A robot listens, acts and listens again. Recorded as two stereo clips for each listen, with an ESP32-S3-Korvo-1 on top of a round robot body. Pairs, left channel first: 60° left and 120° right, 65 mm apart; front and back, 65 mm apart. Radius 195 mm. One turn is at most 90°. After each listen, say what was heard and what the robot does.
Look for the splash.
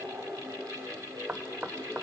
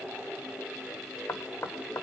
Keep listening.
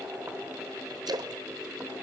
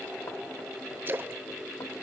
The splash: 120° right. Turn 90° right.
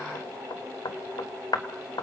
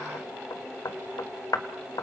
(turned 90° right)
Nothing new. It was at 30° right. Turn 30° right.
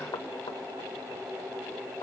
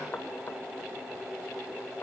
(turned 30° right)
I heard a splash from this way, but can't make it out now.